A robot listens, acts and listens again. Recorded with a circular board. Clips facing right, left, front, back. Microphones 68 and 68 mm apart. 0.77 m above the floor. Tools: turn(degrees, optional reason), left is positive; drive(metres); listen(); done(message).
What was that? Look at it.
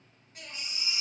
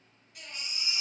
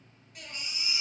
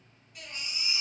turn(degrees=-40, reason="The baby crying: 40° right.")
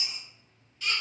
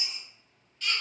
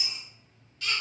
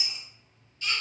done("Facing the baby crying.")